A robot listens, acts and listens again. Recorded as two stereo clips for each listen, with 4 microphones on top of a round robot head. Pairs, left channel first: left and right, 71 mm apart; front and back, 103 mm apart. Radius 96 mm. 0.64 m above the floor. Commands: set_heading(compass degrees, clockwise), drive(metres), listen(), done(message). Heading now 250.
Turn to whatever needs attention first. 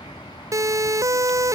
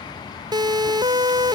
set_heading(20)
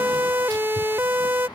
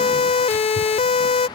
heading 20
set_heading(45)
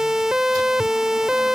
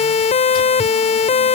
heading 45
done("Facing the siren.")